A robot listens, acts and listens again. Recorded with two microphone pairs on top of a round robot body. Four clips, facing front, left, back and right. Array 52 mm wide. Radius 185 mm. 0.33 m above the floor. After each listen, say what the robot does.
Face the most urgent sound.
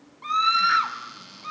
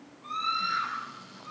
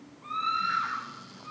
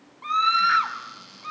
Turn 55° right.
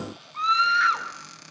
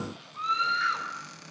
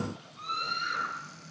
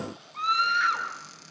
Facing the scream.